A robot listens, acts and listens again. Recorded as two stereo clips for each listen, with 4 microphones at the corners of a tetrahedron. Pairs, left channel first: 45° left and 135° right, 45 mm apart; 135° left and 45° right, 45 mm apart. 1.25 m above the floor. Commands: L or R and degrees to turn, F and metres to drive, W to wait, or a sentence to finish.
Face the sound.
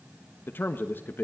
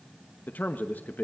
L85
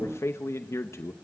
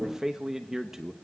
L35
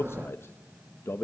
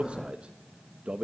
L20
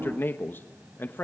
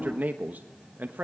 Found it: a man speaking, straight ahead, 1 to 2 m away.